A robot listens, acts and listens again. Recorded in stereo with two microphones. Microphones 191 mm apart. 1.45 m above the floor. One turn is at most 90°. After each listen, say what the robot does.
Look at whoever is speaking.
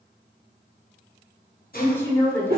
Turn 30° left.
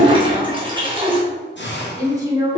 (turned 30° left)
Turn 15° right.
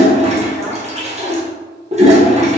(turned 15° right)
Keep listening.
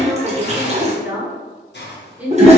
Facing the woman speaking.